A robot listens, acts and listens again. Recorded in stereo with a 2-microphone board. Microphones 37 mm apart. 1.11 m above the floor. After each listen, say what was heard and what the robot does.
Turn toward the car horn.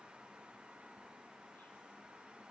Keep listening.
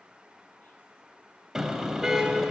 Turn 30° right.
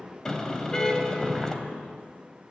So it is at 20° left. Turn 20° left.
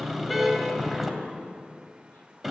Facing the car horn, 2 to 4 m away.